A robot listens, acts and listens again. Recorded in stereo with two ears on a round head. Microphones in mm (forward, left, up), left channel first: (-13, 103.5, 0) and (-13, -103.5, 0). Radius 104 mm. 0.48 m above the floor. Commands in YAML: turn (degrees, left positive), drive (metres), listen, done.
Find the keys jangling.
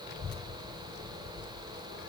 listen: true
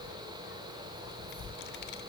listen: true
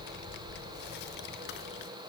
done: "I can't make out keys jangling to turn to."